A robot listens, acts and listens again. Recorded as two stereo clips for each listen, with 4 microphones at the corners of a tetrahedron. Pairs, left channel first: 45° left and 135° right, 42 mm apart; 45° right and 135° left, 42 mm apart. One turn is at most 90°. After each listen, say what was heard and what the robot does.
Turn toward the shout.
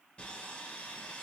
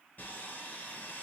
Keep listening.
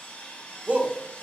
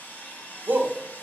The shout: 170° left. Turn 90° left.
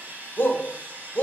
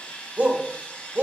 The shout is now 80° left. Turn 80° left.
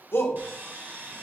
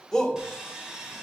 The shout is now 30° left. Turn 30° left.
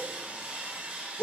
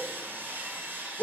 The shout is now 10° right. Turn 10° right.
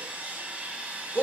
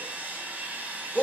Facing the shout, 1 to 2 m away.